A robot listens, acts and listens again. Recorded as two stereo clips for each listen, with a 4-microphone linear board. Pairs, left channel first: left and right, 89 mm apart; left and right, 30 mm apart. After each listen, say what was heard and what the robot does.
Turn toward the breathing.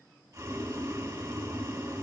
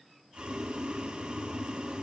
Keep listening.
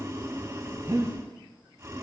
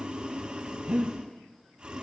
The breathing: about 45° right or 135° right. Turn 45° right.
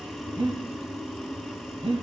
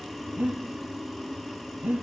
So it is at 85° right. Turn 85° right.
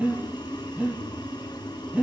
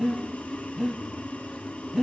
The breathing is now 15° right. Turn 15° right.
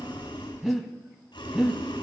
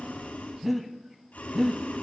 Facing the breathing.